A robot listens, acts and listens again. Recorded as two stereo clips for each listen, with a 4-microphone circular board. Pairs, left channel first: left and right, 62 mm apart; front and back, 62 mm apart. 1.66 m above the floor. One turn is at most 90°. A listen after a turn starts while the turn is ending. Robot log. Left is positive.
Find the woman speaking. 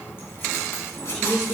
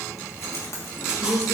end: Found it: a woman speaking, straight ahead, over 4 m away.